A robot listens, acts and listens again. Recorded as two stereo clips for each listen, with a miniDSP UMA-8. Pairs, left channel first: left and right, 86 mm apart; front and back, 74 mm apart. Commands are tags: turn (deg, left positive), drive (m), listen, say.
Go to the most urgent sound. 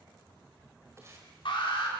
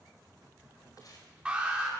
<turn deg="105"/>
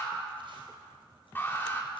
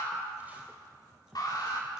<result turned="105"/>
<turn deg="25"/>
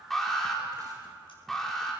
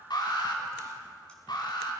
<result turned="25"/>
<drive m="1.0"/>
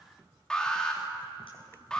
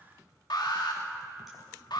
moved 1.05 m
<turn deg="10"/>
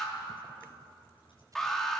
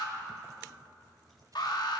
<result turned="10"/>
<drive m="1.0"/>
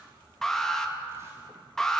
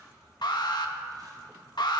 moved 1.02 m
<drive m="1.0"/>
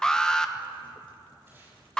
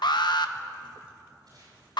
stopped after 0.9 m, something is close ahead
<turn deg="10"/>
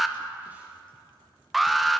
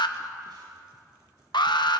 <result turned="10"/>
<say>Arrived at the alarm, straight ahead.</say>